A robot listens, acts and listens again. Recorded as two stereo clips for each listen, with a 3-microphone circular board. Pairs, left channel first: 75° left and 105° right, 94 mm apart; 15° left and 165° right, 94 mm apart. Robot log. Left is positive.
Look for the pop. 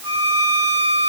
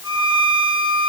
cmd idle
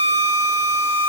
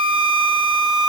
cmd idle
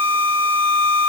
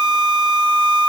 end: I can't make out a pop, only a violin.